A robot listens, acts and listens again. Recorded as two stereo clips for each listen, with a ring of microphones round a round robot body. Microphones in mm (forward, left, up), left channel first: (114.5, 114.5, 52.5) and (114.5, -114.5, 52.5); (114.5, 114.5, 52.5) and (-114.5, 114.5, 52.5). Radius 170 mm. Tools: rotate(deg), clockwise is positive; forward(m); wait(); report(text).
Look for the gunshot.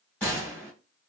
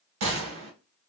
rotate(-175)
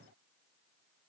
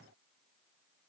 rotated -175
report("Facing where the gunshot came from. I can't hear it now.")